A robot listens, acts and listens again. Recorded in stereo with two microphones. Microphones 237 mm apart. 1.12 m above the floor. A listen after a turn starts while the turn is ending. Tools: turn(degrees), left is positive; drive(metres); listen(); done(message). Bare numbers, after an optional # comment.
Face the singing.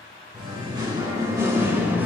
turn(-30)
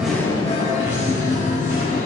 # So it is at 35° left.
turn(35)
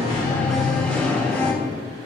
done("Found it: singing, straight ahead.")